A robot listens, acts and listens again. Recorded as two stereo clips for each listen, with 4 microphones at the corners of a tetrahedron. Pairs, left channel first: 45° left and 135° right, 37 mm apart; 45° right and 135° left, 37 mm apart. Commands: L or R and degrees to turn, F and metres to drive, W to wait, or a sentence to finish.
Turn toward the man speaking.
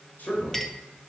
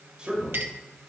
L70
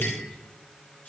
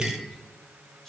W
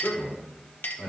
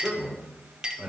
L40
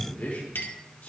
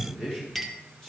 L30
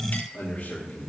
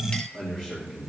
L20
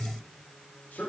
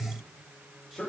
L15
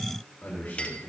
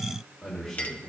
Facing the man speaking.